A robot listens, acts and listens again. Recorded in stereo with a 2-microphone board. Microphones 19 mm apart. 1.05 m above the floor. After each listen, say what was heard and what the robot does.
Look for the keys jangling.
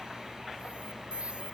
Keep listening.
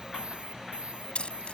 Turn 90° left.
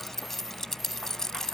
So it is at 30° left. Turn 30° left.
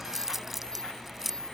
Facing the keys jangling.